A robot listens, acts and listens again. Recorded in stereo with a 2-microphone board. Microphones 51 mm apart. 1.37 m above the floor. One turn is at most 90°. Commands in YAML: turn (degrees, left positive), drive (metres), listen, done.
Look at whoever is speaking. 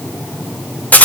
listen: true
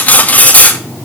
listen: true
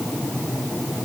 done: "I can't make out anyone speaking, only cutlery clinking."